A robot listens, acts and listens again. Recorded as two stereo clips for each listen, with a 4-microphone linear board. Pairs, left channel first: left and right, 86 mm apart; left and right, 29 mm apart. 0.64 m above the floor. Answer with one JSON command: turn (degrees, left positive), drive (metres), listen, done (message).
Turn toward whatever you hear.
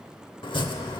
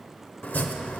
{"turn": 70}
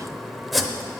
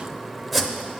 {"done": "Found it: chopping, straight ahead."}